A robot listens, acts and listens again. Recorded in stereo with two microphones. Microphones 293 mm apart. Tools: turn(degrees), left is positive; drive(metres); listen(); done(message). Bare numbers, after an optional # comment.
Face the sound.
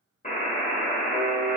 # The buzzer: about 25° left or 155° left.
turn(25)
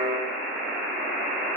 done("Found it: a buzzer, straight ahead.")